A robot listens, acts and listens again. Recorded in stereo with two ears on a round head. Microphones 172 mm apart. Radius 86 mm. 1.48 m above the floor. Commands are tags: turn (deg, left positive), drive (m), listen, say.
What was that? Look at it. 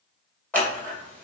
<turn deg="30"/>
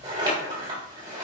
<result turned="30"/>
<turn deg="-25"/>
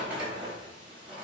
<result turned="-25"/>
<say>Facing the scissors, 2 to 4 m away.</say>